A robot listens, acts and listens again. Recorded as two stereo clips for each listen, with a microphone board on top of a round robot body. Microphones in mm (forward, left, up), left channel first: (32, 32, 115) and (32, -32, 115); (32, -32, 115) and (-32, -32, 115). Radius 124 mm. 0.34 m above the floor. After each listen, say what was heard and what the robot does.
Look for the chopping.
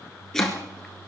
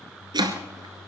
The chopping: 175° left. Turn 175° left.
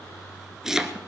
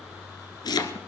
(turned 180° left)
The chopping is now 10° right. Turn 10° right.
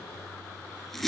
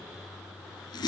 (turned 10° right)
Facing the chopping.